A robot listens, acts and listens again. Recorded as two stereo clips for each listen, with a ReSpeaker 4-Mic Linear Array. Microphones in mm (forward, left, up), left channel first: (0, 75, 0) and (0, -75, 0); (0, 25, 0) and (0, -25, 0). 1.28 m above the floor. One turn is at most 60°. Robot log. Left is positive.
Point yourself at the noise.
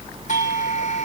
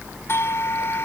note: The doorbell: about 60° left or 120° left.
cmd yaw +60
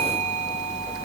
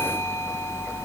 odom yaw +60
cmd idle
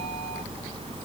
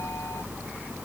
cmd idle
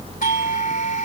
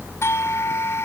note: So it is at 60° left.
cmd yaw +60
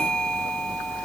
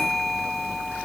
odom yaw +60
cmd idle
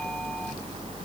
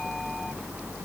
cmd idle
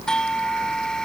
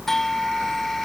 end: Facing the doorbell.